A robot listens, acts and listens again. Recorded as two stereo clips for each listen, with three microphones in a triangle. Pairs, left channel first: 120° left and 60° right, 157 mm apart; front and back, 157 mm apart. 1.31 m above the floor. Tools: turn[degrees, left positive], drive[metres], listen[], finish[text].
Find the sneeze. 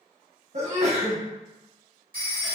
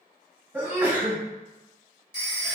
Thought: The sneeze: 100° right.
Action: turn[-100]
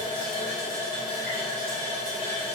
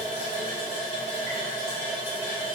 Action: finish[I heard a sneeze from this way, but can't make it out now.]